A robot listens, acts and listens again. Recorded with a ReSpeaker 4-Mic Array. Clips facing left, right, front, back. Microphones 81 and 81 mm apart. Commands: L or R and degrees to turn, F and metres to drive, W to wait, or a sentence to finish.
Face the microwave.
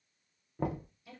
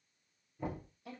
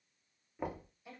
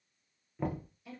W
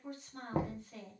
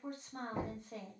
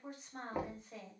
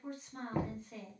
W
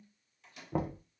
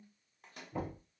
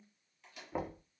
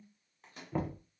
R130
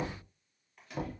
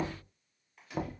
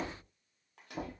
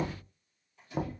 Facing the microwave.